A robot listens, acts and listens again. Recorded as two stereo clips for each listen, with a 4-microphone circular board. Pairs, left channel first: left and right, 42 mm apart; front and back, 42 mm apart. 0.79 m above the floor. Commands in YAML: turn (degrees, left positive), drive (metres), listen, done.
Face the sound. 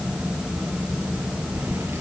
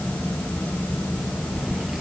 turn: -100
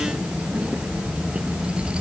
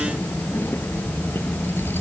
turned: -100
turn: -25
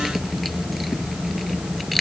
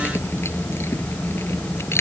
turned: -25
listen: true
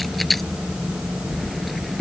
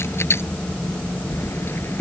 done: "Found it: keys jangling, straight ahead."